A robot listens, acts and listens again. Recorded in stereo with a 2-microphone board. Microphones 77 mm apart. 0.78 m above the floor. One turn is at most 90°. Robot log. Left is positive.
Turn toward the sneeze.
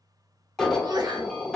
note: The sneeze: about 65° right or 115° right.
cmd yaw -65
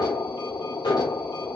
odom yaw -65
cmd idle
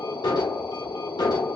end: I heard a sneeze, but can't make it out now. It was about straight ahead or 50° right.